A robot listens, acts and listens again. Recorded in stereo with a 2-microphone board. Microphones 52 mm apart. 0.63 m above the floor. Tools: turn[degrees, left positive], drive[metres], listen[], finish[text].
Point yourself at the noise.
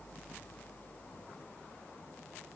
Action: listen[]
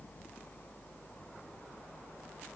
Action: listen[]
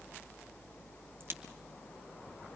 Thought: The crack: about 50° right or 130° right.
Action: turn[-50]
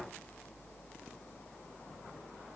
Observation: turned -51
Action: listen[]
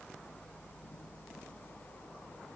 Action: finish[I heard a crack, but can't make it out now. It was about straight ahead or 75° right.]